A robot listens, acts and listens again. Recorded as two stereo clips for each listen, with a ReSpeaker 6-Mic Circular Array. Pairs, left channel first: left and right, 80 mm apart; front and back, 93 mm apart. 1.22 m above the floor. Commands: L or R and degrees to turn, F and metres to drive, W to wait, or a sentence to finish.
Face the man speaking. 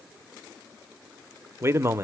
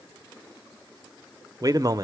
R140
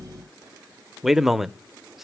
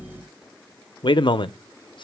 Facing the man speaking.